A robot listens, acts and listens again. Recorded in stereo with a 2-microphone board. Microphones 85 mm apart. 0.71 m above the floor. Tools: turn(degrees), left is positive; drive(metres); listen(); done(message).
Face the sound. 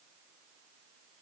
listen()
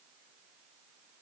listen()
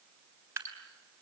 turn(degrees=-30)
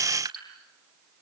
turn(degrees=-120)
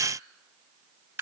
turn(degrees=-30)
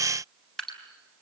done("Found it: dripping, straight ahead.")